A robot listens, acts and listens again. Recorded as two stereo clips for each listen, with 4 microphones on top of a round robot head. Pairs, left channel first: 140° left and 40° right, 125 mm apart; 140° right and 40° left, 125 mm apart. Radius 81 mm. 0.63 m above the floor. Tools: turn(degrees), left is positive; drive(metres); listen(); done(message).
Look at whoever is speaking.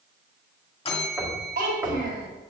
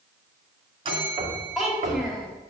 turn(degrees=-45)
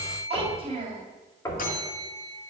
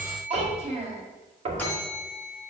done("Facing the child speaking, 2 to 4 m away.")